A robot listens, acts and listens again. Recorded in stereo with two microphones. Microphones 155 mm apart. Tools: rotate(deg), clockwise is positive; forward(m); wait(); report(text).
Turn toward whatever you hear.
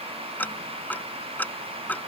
rotate(-30)
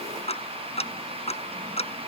rotate(-140)
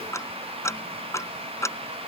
rotate(-20)
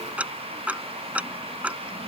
rotate(10)
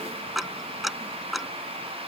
report("Facing the ticking.")